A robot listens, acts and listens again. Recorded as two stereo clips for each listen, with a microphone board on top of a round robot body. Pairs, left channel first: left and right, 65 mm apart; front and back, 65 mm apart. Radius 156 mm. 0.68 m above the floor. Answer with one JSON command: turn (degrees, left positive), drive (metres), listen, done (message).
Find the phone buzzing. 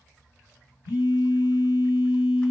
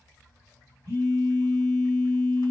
{"turn": 110}
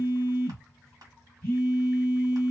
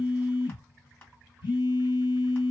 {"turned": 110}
{"turn": 20}
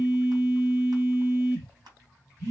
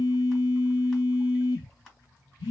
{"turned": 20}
{"done": "Facing the phone buzzing."}